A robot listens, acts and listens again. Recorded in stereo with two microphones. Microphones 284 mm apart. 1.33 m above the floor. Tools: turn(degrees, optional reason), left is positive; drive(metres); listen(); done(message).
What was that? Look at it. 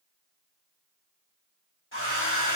turn(degrees=45, reason="The hair dryer: about 45° left or 135° left.")
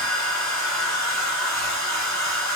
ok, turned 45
turn(degrees=90, reason="So it is at 90° left.")
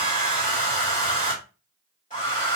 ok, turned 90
turn(degrees=30, reason="The hair dryer is now 30° left.")
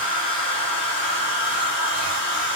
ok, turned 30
done("Found it: a hair dryer, straight ahead.")